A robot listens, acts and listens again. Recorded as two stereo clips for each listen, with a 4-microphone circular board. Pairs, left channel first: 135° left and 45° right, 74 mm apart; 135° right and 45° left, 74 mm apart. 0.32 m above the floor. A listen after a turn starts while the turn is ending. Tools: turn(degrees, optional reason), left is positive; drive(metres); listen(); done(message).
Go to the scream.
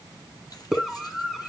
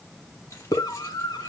turn(degrees=-135, reason="The scream: 135° right.")
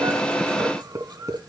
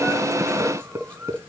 drive(metres=1.0)
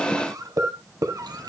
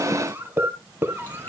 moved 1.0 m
turn(degrees=-10, reason="The scream is now 10° right.")
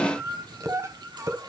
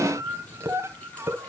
drive(metres=1.0)
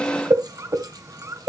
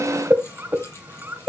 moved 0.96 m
turn(degrees=-10, reason="The scream is now 10° right.")
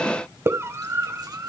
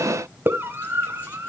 drive(metres=1.0)
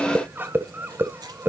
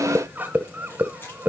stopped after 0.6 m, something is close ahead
done("Arrived at the scream, straight ahead.")